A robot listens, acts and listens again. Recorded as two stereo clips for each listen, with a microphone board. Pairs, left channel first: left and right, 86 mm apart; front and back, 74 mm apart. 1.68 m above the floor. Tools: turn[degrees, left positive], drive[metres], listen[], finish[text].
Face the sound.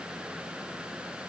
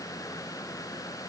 Action: listen[]
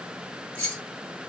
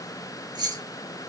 Thought: The keys jangling: 165° left.
Action: turn[165]
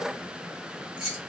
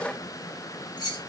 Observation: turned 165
Action: finish[Facing the keys jangling, 2 to 4 m away.]